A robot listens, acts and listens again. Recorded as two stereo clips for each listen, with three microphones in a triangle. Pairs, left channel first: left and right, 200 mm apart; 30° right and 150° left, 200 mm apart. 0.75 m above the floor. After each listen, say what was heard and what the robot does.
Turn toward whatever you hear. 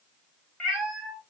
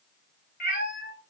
Found it: a cat meowing, straight ahead, 1 to 2 m away.